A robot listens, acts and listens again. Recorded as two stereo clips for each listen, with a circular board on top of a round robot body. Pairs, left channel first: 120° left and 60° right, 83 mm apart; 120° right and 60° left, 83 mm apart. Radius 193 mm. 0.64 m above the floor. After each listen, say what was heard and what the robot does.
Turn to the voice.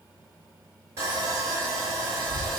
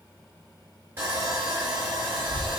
The child speaking: 50° right. Turn 50° right.
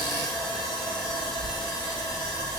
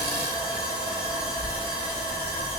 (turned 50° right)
The child speaking is now 20° left. Turn 20° left.
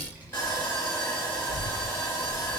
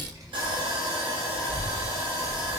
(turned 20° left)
The child speaking is now 10° left. Turn 10° left.
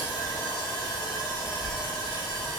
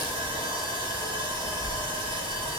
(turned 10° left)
Facing the child speaking.